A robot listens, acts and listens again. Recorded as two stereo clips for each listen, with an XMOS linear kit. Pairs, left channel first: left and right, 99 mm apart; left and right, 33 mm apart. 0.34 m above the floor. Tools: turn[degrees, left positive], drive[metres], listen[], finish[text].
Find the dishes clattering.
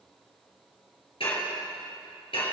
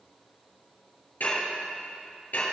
Thought: The dishes clattering: about 65° left or 115° left.
Action: turn[65]
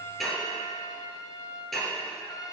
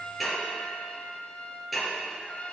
Action: finish[Facing the dishes clattering.]